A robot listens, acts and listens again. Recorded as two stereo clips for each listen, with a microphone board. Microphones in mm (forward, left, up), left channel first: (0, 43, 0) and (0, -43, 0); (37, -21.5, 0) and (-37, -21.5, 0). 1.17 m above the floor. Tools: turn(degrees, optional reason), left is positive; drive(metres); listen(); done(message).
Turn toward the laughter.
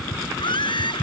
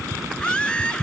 turn(degrees=75, reason="The laughter: 75° left.")
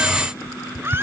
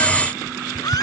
turn(degrees=-30, reason="The laughter is now 30° right.")
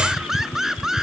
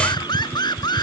done("Found it: laughter, straight ahead.")